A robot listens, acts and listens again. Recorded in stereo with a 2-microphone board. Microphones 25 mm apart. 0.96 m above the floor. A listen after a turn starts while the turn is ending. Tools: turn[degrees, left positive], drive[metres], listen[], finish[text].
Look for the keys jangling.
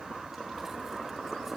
Action: listen[]
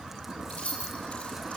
Thought: The keys jangling: about 60° left or 120° left.
Action: turn[60]
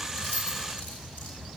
Action: listen[]
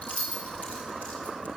Thought: So it is at 70° left.
Action: turn[70]
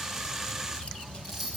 Thought: The keys jangling is now 10° right.
Action: turn[-10]
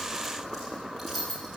Action: finish[Facing the keys jangling.]